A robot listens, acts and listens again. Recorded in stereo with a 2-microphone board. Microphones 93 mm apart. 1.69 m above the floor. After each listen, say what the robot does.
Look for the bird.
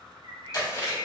Turn 70° left.
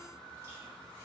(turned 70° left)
Keep listening.
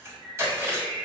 Turn 40° left.
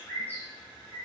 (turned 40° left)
Turn 25° left.
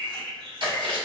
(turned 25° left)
Turn 10° left.
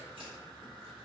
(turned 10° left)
Keep listening.
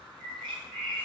Facing the bird, under 1 m away.